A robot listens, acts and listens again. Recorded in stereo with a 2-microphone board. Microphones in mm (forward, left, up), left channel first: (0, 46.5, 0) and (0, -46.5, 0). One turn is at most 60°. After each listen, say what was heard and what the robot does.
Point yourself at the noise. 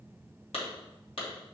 Turn 60° left.
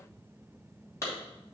So it is at 30° left. Turn 30° left.
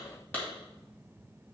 The clap is now 15° left. Turn 15° left.
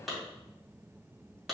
Facing the clap, 2 to 4 m away.